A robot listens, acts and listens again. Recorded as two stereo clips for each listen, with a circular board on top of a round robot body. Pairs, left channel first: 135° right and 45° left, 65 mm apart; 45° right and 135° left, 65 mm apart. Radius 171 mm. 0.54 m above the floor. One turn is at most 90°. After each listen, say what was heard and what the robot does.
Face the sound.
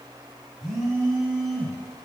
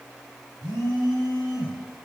The phone buzzing: 125° left. Turn 90° left.
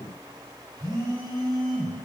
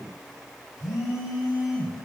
The phone buzzing is now 45° left. Turn 45° left.
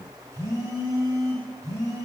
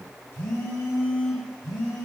Facing the phone buzzing.